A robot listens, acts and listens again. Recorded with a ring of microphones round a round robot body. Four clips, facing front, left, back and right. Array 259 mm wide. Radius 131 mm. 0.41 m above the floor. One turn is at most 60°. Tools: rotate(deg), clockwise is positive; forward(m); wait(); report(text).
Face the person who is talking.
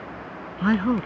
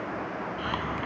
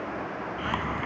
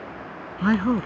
rotate(45)
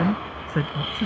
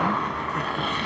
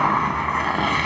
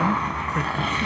wait()
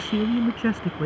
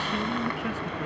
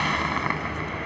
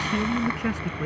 rotate(15)
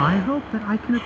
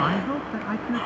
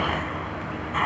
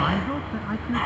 report("Found it: a man speaking, straight ahead.")